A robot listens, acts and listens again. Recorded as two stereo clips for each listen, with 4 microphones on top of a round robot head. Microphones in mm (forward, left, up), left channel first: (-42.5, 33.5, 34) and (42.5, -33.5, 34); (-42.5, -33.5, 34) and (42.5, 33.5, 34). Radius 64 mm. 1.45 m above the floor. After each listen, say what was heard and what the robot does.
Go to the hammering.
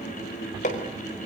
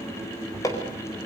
The hammering: 155° left. Turn 155° left.
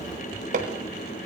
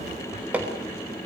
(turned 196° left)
The hammering is now 40° right. Turn 40° right.
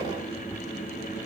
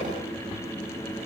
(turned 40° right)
Keep listening.
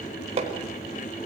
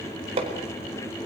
Drive 1.0 m forward.
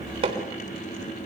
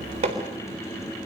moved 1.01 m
Drive 1.0 m forward.
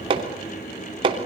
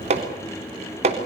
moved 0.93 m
The hammering is now 10° left. Turn 10° left.
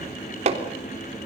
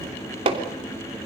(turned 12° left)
Drive 1.0 m forward.
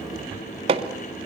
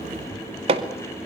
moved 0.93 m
Drive 1.0 m forward.
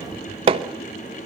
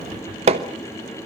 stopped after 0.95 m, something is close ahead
Arrived at the hammering, straight ahead.